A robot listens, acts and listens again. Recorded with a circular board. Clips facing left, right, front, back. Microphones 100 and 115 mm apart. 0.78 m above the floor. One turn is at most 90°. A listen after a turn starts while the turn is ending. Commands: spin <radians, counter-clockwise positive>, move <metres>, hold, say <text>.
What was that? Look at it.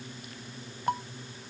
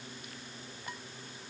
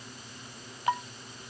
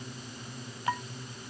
spin 1.22
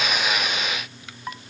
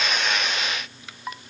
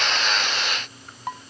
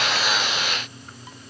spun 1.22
say Found it: dishes clattering, straight ahead.